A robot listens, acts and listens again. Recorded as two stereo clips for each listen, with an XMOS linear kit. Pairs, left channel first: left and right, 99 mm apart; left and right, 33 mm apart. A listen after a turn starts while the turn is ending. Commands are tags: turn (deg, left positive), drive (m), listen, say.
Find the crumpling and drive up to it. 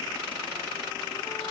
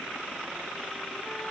<listen/>
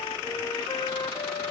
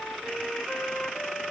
<listen/>
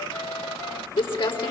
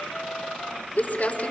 <turn deg="65"/>
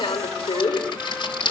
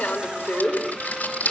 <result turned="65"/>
<turn deg="55"/>
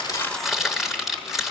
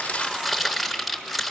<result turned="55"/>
<drive m="1.0"/>
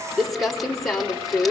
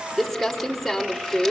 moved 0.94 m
<drive m="1.0"/>
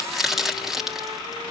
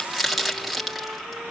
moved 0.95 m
<drive m="1.0"/>
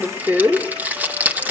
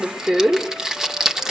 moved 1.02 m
<turn deg="-20"/>
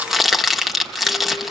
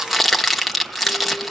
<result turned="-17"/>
<drive m="1.0"/>
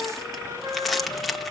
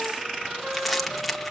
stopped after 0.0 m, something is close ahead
<say>I am next to the crumpling.</say>